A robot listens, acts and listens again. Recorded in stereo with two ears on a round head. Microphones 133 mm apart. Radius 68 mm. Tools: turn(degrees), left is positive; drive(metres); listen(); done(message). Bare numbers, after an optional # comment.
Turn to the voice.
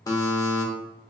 listen()
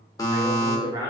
# The man speaking: about 25° right or 155° right.
turn(-25)
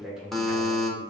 done("Facing the man speaking.")